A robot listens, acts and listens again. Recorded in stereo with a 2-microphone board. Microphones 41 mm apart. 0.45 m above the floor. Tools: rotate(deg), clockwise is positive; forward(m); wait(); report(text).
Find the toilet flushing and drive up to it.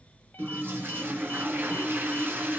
rotate(65)
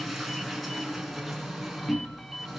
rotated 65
forward(1.0)
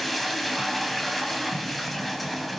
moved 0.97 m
forward(1.0)
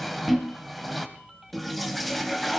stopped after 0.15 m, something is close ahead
report("I am next to the toilet flushing.")